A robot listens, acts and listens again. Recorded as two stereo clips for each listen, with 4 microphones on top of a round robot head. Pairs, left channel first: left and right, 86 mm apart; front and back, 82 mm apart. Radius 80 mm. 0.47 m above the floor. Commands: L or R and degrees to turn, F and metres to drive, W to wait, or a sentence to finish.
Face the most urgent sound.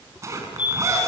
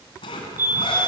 L120
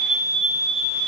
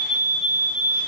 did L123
Facing the fire alarm.